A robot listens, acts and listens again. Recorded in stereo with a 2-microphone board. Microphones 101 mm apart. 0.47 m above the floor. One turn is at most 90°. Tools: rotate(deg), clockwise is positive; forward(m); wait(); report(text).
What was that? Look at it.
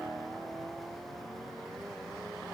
wait()
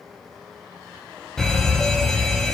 rotate(-30)
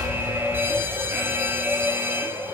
rotate(25)
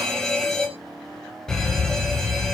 report("Facing the fire alarm, over 4 m away.")